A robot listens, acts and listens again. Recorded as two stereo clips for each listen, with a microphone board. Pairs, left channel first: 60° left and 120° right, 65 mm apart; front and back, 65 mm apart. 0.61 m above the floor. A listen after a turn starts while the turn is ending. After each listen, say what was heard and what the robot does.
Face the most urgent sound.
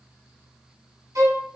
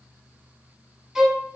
Keep listening.
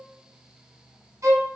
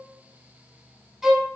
Keep listening.
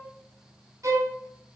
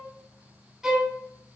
I can't make out anything urgent to turn to.